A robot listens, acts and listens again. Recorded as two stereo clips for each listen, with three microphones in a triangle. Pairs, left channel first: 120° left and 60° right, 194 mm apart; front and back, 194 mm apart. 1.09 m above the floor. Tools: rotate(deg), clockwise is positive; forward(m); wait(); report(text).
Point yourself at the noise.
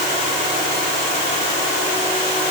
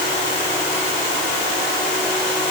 wait()
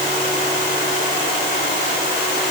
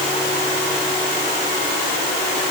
wait()
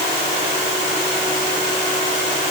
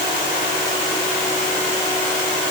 report("I can't make out anything.")